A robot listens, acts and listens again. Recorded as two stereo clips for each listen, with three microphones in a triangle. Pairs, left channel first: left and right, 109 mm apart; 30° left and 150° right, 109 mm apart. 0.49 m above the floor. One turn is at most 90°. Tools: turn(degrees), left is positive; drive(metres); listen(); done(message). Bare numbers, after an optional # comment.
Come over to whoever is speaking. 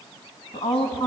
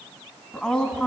# The woman speaking: 120° left.
turn(90)
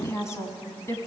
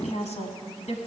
# The woman speaking is now 25° left.
turn(25)
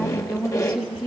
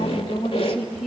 drive(1.0)
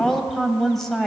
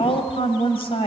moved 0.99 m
drive(1.0)
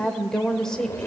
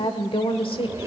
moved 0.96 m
drive(1.0)
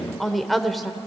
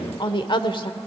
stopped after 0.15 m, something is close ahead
done("Arrived at the woman speaking, straight ahead.")